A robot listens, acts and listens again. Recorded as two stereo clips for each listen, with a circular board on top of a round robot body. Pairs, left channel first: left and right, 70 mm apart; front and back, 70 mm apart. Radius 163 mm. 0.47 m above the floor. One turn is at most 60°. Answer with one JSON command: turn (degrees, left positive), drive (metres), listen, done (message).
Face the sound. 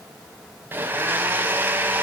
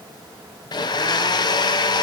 {"turn": -25}
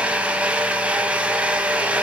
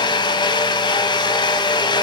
{"turn": -15}
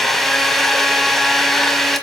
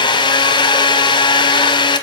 {"done": "Facing the blender."}